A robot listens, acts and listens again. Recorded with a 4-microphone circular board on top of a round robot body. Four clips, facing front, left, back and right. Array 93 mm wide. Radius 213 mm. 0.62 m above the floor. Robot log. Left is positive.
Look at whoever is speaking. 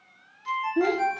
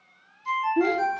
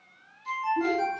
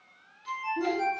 note: The child speaking: 45° left.
cmd yaw +45
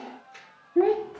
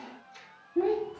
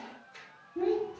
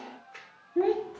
note: The child speaking is now 10° right.
cmd yaw -10
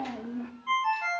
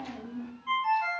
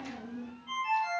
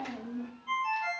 end: Facing the child speaking.